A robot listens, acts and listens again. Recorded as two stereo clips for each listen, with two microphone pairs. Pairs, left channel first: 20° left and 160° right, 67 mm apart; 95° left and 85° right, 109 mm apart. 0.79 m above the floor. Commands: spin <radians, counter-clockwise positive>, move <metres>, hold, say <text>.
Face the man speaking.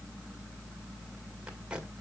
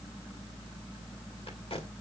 hold
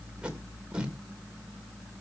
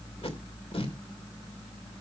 hold
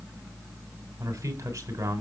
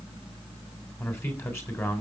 spin 2.79
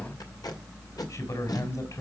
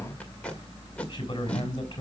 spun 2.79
spin 0.87
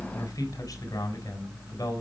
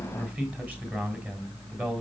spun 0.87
say Facing the man speaking, over 4 m away.